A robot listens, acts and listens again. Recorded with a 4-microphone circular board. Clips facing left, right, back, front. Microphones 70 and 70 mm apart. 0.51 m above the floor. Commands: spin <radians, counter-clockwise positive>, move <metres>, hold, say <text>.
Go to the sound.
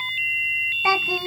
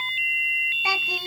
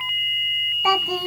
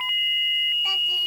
spin 2.71
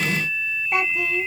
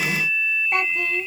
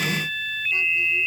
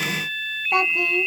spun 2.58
move 1.0
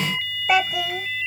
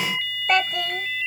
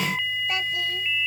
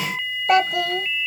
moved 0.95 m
move 1.0
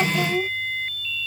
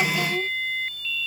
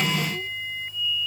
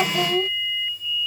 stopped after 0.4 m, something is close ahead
spin 0.26
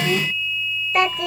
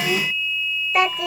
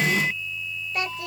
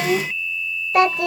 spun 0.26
say I am next to the child speaking.